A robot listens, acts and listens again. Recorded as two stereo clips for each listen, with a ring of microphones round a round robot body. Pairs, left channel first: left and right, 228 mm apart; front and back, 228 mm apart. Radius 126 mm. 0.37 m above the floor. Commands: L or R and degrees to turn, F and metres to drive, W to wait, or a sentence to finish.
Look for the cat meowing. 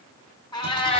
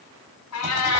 L25
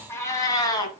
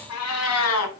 L20
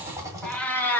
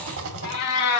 L10
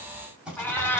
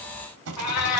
L10
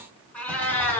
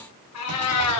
L10
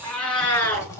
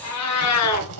L10
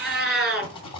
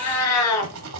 Found it: a cat meowing, straight ahead.